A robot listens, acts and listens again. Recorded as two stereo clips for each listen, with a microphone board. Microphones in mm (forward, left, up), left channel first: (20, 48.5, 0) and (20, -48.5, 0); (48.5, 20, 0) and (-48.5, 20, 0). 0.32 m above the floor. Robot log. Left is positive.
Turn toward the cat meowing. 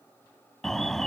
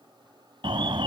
cmd idle
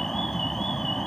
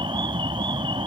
cmd idle
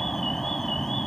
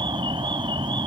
end: I can't make out a cat meowing, only an alarm.